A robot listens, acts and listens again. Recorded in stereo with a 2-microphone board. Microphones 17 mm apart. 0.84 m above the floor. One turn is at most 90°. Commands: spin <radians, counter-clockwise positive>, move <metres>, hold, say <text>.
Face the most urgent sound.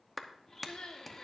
spin 1.13
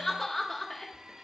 spin 0.44
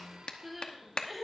say Facing the crying.